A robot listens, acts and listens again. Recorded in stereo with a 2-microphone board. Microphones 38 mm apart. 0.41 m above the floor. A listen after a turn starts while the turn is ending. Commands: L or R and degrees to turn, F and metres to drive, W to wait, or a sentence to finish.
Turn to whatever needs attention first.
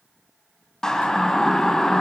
L20
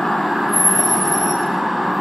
Facing the siren.